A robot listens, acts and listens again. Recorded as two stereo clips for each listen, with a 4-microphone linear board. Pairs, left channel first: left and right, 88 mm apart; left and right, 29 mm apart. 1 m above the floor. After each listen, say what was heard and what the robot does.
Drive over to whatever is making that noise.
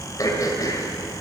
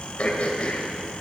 The throat clearing: about 45° left or 135° left. Turn 45° left.
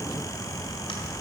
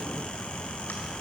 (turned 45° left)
Keep listening.
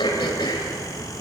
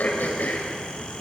So it is at 90° left. Turn 90° left.
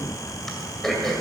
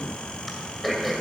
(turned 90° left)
Drive 1.0 m forward.
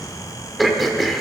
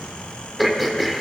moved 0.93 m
Drive 1.0 m forward.
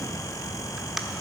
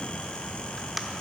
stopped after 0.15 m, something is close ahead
I am next to the throat clearing.